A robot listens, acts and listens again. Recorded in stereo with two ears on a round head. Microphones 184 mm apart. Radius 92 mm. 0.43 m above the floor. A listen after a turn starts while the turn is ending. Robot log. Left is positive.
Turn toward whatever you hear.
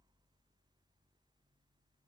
cmd idle
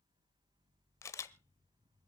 cmd yaw +30
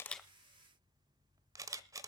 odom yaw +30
note: So it is at 15° right.
cmd yaw -15
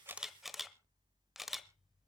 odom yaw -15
end: Facing the camera shutter.